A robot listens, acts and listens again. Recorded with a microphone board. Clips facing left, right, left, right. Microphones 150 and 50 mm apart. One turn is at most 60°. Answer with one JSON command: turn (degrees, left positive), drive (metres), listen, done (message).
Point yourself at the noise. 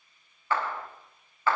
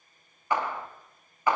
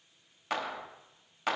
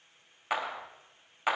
{"turn": -15}
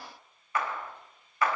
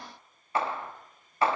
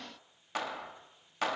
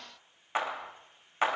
{"turn": -60}
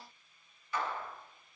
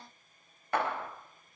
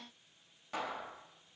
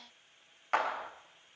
{"turn": -60}
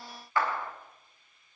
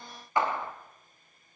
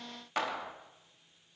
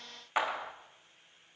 {"turn": -20}
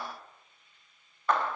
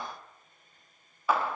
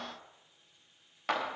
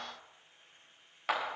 {"done": "Found it: a clap, straight ahead, under 1 m away."}